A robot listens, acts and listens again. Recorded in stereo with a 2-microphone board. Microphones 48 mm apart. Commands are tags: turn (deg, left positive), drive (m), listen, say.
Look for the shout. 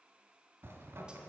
<listen/>
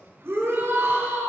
<turn deg="-60"/>
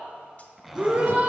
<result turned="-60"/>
<turn deg="-40"/>
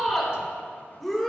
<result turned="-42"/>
<say>Facing the shout, 2 to 4 m away.</say>